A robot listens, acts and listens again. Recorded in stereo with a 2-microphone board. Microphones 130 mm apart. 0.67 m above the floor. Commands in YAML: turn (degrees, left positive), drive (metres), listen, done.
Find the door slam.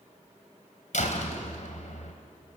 turn: 70
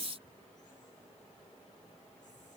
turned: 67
listen: true
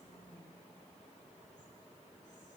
done: "I heard a door slam, but can't make it out now. It was about straight ahead or 45° left."